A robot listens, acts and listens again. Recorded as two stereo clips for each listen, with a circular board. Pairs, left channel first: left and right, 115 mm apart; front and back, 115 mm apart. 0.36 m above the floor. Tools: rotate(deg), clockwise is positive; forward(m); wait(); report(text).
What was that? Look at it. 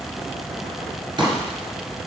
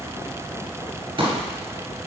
rotate(140)
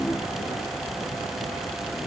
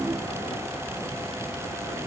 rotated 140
report("Facing where the pop came from. I can't hear it now.")